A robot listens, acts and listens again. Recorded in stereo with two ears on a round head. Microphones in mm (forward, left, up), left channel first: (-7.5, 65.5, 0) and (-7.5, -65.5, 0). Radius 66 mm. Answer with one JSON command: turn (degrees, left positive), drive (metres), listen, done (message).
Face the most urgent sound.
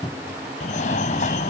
{"turn": 60}
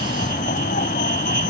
{"turn": 60}
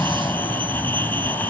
{"turn": 15}
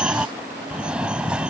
{"done": "Found it: a fire alarm, straight ahead."}